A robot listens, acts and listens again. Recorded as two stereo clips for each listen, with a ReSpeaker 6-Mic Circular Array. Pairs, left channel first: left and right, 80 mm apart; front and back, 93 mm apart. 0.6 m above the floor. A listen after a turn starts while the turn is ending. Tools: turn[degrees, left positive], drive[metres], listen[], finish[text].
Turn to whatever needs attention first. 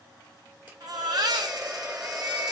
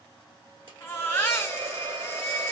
Thought: The baby crying: 65° right.
Action: turn[-65]
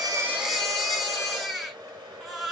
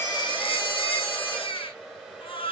Action: finish[Found it: a baby crying, straight ahead, 1 to 2 m away.]